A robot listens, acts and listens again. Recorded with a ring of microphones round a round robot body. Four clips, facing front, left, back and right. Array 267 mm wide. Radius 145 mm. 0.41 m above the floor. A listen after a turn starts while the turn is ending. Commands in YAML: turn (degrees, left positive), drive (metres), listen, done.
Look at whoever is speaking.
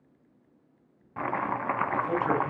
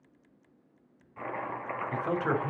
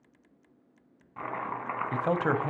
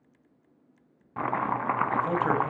turn: -175
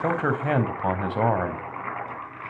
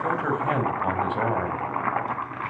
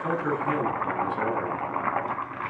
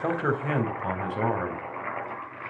turn: 10
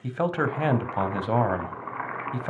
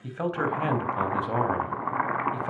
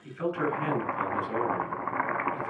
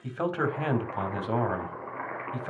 done: "Facing the man speaking."